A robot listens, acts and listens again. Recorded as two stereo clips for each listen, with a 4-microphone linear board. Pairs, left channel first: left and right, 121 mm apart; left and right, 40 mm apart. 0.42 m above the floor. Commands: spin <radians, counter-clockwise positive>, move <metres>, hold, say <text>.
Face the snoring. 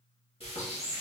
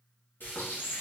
hold
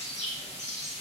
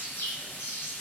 hold
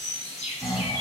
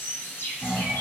spin 0.52
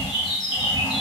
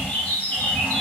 spin -0.44
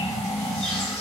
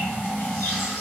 say Found it: snoring, straight ahead.